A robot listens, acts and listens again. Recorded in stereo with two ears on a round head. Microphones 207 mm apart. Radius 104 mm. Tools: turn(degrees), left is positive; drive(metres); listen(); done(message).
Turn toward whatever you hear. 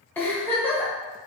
turn(degrees=30)
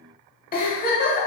turn(degrees=135)
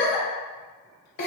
turn(degrees=50)
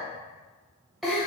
done("Found it: a giggle, straight ahead, 1 to 2 m away.")